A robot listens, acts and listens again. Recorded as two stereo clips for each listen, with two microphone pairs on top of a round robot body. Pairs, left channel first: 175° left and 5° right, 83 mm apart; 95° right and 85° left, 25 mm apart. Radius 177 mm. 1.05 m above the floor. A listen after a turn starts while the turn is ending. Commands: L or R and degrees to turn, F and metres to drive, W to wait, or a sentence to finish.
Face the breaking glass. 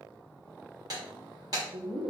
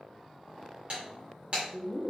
L45
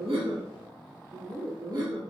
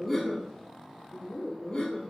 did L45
I heard breaking glass from this way, but can't make it out now.